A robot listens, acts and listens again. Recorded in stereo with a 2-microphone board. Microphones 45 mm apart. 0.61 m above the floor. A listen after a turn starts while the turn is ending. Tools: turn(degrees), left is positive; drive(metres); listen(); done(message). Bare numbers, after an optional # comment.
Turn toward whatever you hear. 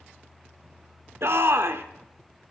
# The shout: about 60° right or 120° right.
turn(-60)
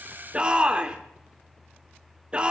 # So it is at 25° right.
turn(-25)
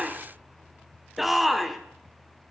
done("Facing the shout, 1 to 2 m away.")